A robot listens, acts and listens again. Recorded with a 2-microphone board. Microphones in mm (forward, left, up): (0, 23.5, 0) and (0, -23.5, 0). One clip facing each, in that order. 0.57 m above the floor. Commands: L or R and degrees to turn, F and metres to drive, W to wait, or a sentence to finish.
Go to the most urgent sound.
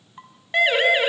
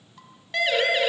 L25
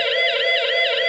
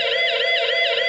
F1.0
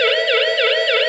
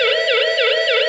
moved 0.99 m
F1.0
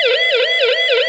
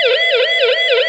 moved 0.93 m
F1.0
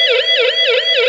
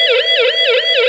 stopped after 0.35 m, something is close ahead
I am next to the siren.